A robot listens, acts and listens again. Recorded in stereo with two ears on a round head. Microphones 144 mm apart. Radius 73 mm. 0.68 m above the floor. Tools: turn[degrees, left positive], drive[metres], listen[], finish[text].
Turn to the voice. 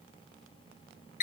Action: listen[]
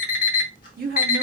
Thought: The woman speaking: about 60° right or 120° right.
Action: turn[-60]
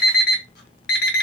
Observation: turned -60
Action: listen[]
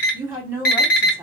Thought: So it is at 15° right.
Action: turn[-15]
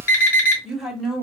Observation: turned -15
Action: finish[Facing the woman speaking.]